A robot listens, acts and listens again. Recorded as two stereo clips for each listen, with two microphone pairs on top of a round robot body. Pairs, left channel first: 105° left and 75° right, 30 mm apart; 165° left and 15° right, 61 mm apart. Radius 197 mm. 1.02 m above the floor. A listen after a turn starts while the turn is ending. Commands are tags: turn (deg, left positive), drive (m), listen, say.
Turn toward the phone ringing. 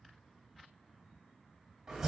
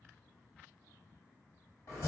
<listen/>
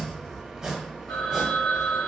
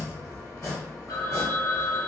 <turn deg="140"/>
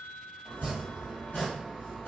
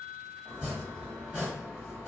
<listen/>
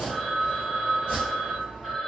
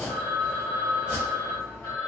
<say>Found it: a phone ringing, straight ahead.</say>